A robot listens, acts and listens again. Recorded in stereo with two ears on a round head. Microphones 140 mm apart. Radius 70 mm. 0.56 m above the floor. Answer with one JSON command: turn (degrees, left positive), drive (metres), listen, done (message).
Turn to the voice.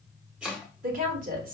{"turn": -60}
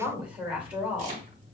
{"turn": -10}
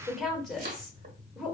{"done": "Facing the woman speaking."}